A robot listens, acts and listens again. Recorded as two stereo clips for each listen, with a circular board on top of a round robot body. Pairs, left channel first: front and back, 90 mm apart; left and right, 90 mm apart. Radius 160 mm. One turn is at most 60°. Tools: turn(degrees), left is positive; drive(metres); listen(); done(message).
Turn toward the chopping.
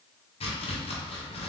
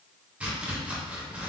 turn(degrees=-15)
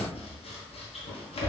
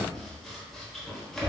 done("Found it: chopping, straight ahead, 1 to 2 m away.")